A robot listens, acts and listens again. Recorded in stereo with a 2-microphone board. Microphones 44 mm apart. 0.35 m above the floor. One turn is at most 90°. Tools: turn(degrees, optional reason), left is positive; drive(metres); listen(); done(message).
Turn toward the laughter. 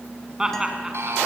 turn(degrees=-15, reason="The laughter: about 15° right or 165° right.")
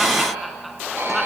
listen()
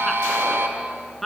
turn(degrees=30)
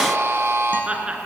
turn(degrees=-25, reason="So it is at 25° right.")
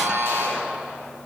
listen()
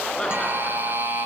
listen()
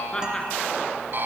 turn(degrees=15, reason="The laughter is now 15° left.")
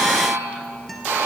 listen()
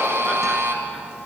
listen()
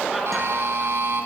done("Facing where the laughter came from. I can't hear it now.")